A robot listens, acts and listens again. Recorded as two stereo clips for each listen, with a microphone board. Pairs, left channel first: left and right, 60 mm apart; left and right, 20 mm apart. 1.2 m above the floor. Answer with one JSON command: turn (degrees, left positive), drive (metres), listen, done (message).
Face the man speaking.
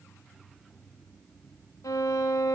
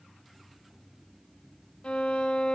{"listen": true}
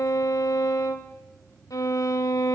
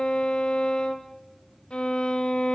{"listen": true}
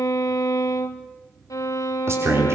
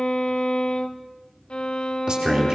{"turn": -55}
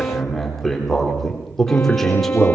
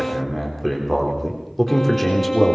{"done": "Found it: a man speaking, straight ahead, 2 to 4 m away."}